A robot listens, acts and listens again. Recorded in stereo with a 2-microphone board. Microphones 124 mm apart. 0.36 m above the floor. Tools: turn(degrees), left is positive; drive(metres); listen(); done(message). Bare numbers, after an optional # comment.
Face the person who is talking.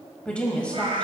turn(30)
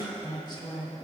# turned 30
# So it is at 135° left.
turn(135)
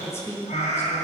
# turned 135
# The woman speaking is now 25° left.
turn(25)
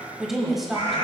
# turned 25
done("Facing the woman speaking.")